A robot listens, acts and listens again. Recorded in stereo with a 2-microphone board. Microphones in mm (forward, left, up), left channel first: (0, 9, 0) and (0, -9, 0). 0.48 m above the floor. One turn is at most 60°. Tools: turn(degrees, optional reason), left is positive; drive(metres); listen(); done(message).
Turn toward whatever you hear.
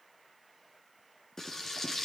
turn(degrees=30, reason="The frying: about 30° left or 150° left.")
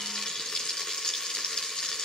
turn(degrees=60, reason="So it is at 120° left.")
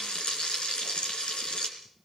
turn(degrees=60, reason="The frying is now 65° left.")
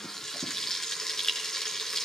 turn(degrees=30, reason="The frying is now 30° left.")
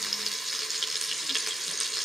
turn(degrees=-10, reason="The frying is now 10° right.")
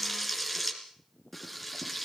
done("Found it: frying, straight ahead, 2 to 4 m away.")